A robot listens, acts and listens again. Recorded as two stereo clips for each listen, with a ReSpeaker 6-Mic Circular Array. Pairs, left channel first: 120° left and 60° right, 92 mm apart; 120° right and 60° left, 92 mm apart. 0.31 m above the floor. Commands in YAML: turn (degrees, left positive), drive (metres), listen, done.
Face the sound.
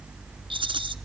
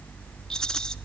turn: -35
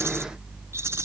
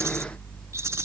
done: "Facing the rattle, 1 to 2 m away."